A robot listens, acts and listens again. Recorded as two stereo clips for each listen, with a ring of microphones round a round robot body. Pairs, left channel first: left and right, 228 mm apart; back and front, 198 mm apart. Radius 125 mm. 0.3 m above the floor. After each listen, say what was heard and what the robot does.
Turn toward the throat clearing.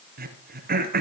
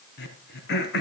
The throat clearing: 140° right. Turn 140° right.
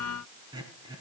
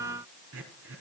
The throat clearing is now 20° right. Turn 20° right.
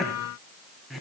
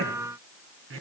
Facing the throat clearing, 2 to 4 m away.